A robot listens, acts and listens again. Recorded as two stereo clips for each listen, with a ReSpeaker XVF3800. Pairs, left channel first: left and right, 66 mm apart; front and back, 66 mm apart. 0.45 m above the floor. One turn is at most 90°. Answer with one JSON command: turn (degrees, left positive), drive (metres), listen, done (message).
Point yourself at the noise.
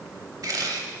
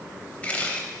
{"turn": -70}
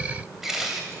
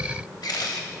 {"done": "Found it: a camera shutter, straight ahead, under 1 m away."}